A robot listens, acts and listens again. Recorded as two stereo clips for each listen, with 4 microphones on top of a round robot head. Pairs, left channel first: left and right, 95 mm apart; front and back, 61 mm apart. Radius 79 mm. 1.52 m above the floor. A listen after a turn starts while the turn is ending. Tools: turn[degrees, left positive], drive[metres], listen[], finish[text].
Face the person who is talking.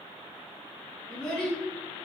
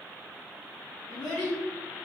Thought: The child speaking: 10° left.
Action: turn[10]
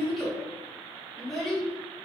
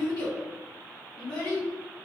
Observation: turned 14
Action: finish[Found it: a child speaking, straight ahead.]